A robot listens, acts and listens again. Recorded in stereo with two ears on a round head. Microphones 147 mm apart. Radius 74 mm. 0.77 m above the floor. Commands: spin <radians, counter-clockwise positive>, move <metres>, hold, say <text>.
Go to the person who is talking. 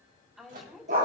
spin 0.52
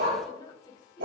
spin 2.71
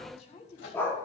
spin 0.79
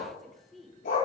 move 1.0
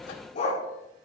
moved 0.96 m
hold
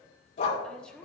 move 1.0
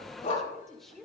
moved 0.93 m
move 1.0
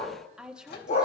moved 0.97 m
move 1.0
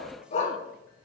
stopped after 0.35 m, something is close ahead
hold
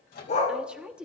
say I am next to the woman speaking.